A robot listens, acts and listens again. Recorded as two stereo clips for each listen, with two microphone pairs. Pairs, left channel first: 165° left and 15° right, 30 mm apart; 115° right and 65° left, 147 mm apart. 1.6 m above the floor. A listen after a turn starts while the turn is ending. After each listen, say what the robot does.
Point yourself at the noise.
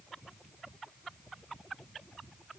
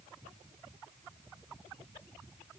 Keep listening.
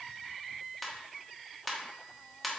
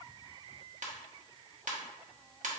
Turn 75° left.
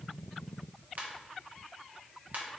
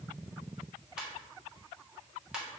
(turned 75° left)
Turn 20° right.
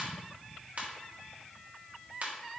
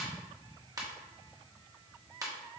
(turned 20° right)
Found it: a ringtone, straight ahead.